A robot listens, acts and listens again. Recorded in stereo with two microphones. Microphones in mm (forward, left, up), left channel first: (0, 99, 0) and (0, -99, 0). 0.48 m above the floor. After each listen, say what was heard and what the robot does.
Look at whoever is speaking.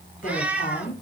The woman speaking: about 45° left or 135° left. Turn 45° left.
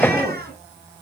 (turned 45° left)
Facing the woman speaking.